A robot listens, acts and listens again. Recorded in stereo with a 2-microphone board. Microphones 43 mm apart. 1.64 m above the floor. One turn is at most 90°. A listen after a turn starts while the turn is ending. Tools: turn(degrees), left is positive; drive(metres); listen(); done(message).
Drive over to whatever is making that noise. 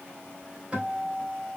turn(degrees=-20)
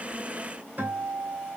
turn(degrees=-90)
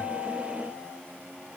turn(degrees=-50)
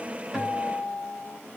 drive(metres=1.0)
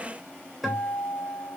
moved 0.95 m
drive(metres=1.0)
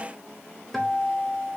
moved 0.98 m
drive(metres=1.0)
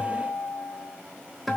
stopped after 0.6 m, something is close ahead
done("I am next to the guitar.")